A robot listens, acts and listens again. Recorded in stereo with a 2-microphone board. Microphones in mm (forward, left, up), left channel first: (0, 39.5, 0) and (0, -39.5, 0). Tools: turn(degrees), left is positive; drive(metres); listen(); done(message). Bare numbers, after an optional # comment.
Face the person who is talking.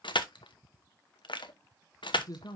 # The man speaking: about 50° left or 130° left.
turn(50)
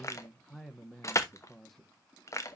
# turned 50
done("Found it: a man speaking, straight ahead, under 1 m away.")